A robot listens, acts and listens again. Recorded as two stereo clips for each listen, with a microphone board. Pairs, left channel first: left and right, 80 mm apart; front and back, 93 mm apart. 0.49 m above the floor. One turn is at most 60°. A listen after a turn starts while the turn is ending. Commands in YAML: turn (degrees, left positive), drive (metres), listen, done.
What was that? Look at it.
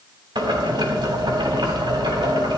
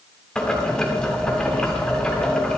turn: -60
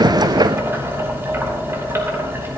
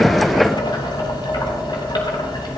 turn: -35
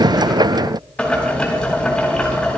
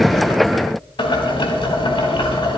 turn: 15
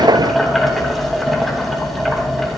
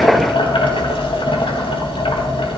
done: "Found it: boiling, straight ahead."